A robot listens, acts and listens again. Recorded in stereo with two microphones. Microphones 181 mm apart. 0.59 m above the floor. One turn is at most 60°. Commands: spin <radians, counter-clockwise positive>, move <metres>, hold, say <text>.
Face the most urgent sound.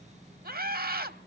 spin -0.96
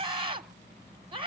spin -0.61
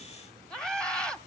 say Found it: a scream, straight ahead.